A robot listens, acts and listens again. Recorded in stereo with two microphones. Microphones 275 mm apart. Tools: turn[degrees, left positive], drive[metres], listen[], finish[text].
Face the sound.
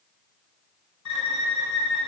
Action: turn[90]
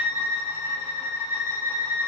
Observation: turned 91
Thought: So it is at 10° right.
Action: turn[-10]
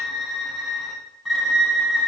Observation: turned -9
Action: finish[Found it: a violin, straight ahead, under 1 m away.]